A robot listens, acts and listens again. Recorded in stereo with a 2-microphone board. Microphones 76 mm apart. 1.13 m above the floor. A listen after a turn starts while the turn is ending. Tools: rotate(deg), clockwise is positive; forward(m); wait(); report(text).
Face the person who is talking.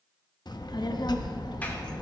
rotate(-65)
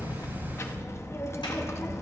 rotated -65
rotate(-40)
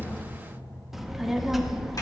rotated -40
report("Found it: a child speaking, straight ahead, under 1 m away.")